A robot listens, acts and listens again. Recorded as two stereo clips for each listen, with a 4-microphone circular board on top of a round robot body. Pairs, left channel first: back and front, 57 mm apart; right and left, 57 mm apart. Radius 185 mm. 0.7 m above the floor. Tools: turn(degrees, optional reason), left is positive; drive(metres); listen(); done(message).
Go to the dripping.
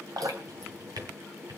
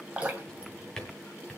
turn(degrees=20, reason="The dripping: 20° left.")
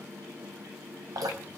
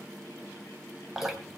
drive(metres=1.0)
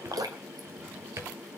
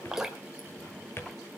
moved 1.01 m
turn(degrees=10, reason="The dripping is now 10° left.")
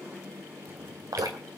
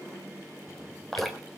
drive(metres=1.0)
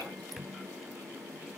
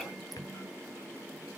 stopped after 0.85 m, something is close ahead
listen()
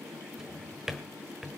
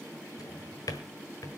listen()
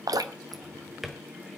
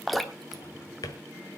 done("I am next to the dripping.")